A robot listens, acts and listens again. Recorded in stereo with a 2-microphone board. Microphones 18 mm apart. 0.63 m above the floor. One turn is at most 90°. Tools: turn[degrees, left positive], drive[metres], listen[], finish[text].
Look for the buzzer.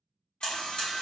Thought: The buzzer: about 70° left or 110° left.
Action: turn[70]
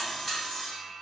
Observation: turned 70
Action: listen[]
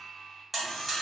Action: finish[Found it: a buzzer, straight ahead.]